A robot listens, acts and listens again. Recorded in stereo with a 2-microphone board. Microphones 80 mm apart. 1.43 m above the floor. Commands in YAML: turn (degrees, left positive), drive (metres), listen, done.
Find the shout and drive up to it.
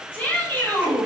turn: 20
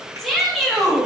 drive: 1.0
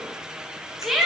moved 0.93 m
drive: 1.0
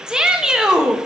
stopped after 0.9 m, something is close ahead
turn: -10
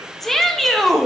done: "Arrived at the shout, straight ahead."